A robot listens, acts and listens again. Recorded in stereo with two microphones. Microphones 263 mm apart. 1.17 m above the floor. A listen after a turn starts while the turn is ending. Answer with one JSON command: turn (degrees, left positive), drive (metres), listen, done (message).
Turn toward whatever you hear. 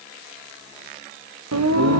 {"turn": -90}
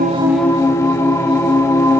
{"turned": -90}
{"turn": 10}
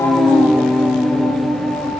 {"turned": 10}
{"done": "Found it: singing, straight ahead."}